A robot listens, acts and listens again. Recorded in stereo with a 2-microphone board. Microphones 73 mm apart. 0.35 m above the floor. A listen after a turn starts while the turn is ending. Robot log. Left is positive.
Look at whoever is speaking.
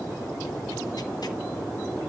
cmd idle
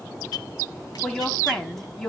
cmd yaw +30
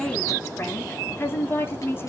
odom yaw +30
note: So it is at 140° left.
cmd yaw +140
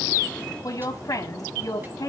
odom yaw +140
note: The woman speaking is now 60° left.
cmd yaw +60
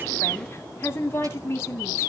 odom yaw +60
note: The woman speaking is now 35° left.
cmd yaw +35
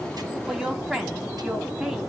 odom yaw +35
note: The woman speaking is now 10° right.
cmd yaw -10
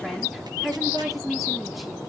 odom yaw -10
end: Found it: a woman speaking, straight ahead.